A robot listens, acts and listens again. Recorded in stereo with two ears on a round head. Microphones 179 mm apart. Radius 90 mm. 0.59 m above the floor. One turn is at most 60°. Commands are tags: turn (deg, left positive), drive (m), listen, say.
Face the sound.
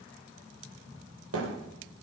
<turn deg="-60"/>
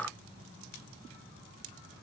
<turn deg="-30"/>
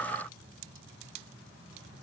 <say>I heard a thud from this way, but can't make it out now.</say>